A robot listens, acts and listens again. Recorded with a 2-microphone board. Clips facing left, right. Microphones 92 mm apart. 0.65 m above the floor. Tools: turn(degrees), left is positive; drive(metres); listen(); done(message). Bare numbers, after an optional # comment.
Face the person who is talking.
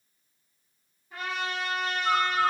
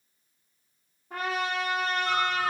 listen()
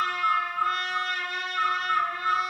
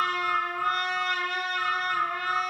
listen()
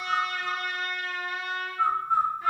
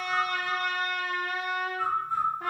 done("I can't make out anyone speaking to turn to.")